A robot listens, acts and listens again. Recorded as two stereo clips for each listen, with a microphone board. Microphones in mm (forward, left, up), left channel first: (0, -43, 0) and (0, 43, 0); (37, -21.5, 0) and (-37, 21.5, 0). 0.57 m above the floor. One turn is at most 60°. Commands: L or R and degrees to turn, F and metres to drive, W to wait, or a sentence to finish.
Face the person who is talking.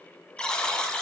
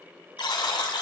W
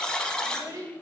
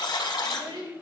L60
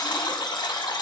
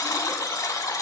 L60
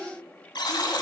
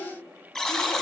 L20
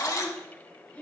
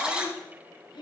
R20
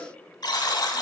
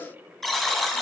W
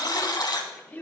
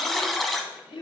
R20
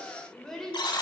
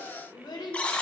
Facing the child speaking.